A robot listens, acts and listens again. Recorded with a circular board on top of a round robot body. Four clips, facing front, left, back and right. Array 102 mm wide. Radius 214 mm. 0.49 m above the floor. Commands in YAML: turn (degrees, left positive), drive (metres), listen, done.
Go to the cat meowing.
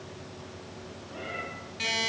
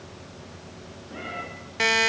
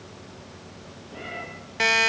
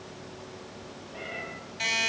turn: 85
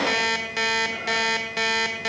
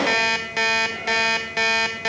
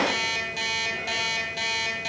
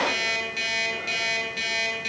listen: true
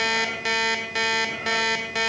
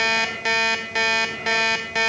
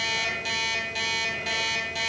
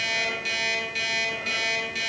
listen: true
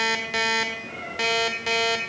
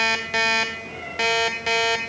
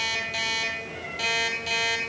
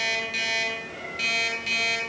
drive: 1.0
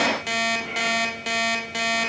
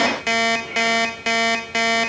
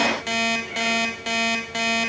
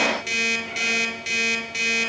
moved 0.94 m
listen: true
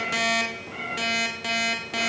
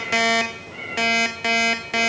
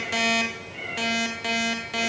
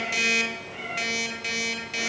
drive: 1.0
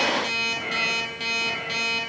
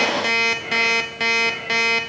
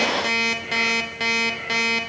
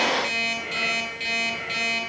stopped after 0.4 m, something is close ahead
listen: true
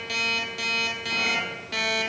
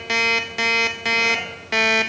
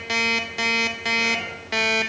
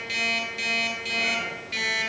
listen: true
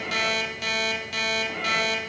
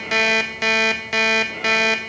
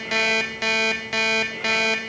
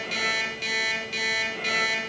done: "I heard a cat meowing from this way, but can't make it out now. I did not reach it."